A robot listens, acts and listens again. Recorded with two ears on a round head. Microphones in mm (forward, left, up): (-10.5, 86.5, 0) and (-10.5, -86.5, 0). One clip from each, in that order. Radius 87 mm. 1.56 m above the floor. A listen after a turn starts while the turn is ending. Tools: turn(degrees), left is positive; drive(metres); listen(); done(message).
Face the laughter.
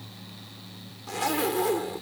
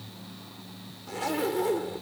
listen()
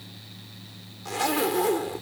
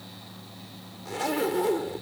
listen()
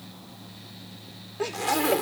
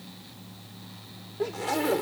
turn(degrees=70)
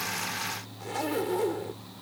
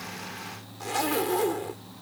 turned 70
listen()
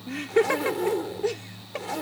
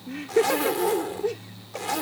turn(degrees=30)
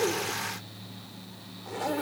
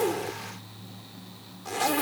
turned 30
listen()
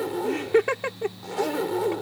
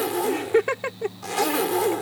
done("Found it: laughter, straight ahead.")